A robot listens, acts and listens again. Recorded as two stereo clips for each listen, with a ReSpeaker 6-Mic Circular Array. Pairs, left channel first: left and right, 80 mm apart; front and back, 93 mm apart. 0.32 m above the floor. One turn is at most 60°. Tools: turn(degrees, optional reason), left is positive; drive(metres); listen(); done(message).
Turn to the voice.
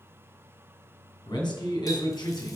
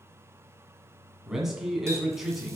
turn(degrees=60, reason="The man speaking: 95° left.")
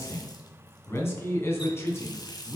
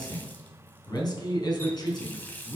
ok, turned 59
turn(degrees=35, reason="The man speaking is now 35° left.")
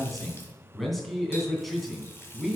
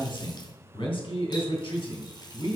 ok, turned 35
done("Facing the man speaking.")